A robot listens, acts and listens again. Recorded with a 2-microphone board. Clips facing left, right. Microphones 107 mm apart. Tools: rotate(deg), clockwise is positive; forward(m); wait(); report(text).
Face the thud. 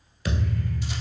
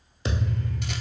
rotate(25)
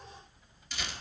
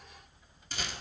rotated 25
wait()
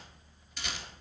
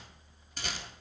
report("I heard a thud, but can't make it out now. It was about straight ahead or 130° right.")